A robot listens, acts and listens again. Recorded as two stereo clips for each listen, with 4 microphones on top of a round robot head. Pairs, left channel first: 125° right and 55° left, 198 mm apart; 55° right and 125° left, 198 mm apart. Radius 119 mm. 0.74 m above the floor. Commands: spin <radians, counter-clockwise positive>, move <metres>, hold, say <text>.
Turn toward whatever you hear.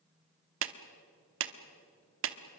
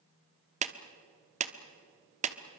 spin 1.22
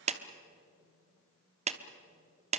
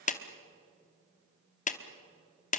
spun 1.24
say Facing the clap, 1 to 2 m away.